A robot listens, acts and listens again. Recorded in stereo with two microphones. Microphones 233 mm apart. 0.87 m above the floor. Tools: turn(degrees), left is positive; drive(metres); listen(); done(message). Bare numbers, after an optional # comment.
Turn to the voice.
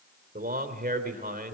# The man speaking: about 40° right or 140° right.
turn(-40)
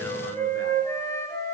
listen()
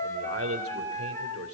# So it is at 105° right.
turn(-105)
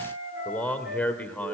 done("Found it: a man speaking, straight ahead, 2 to 4 m away.")